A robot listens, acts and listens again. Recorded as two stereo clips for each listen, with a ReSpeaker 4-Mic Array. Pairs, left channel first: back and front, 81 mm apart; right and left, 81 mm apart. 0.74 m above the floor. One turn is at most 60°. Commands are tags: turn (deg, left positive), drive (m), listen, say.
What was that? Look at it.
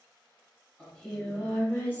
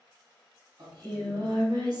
<turn deg="60"/>
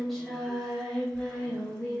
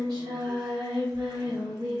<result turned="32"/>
<turn deg="60"/>
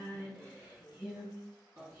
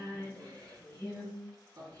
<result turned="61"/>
<turn deg="60"/>
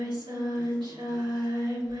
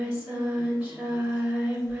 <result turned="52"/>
<turn deg="15"/>
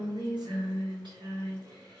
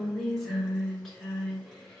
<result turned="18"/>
<say>Facing the singing, 2 to 4 m away.</say>